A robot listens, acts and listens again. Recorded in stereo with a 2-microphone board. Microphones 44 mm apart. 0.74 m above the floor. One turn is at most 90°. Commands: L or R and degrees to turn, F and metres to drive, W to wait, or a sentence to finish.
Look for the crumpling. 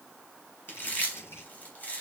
L70
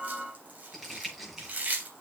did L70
Found it: crumpling, straight ahead.